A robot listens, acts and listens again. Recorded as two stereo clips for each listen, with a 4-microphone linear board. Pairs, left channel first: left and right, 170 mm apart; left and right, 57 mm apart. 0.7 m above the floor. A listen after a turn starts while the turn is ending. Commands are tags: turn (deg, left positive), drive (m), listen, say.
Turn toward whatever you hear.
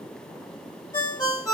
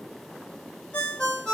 <turn deg="20"/>
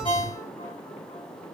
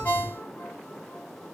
<listen/>
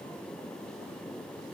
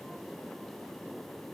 <listen/>
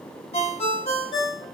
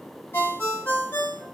<turn deg="140"/>
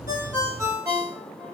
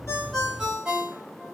<turn deg="-15"/>
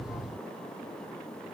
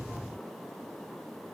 <listen/>
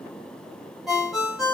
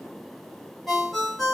<say>Facing the ringtone.</say>